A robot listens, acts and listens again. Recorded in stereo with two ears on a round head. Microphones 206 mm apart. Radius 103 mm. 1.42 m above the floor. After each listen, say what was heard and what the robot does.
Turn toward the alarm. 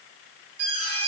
The alarm: about 55° right or 125° right. Turn 55° right.
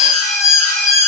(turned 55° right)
Found it: an alarm, straight ahead.